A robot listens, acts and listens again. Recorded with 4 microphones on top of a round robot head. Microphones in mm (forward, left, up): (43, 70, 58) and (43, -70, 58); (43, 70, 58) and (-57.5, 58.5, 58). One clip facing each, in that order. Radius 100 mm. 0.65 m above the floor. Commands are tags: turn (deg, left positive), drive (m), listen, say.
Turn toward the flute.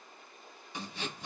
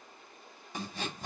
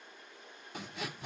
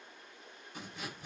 <listen/>
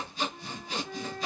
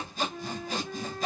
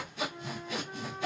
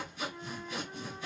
<turn deg="-70"/>
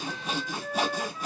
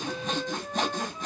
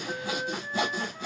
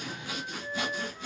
<turn deg="-20"/>
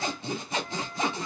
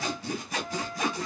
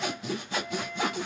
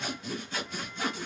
<say>Found it: a flute, straight ahead.</say>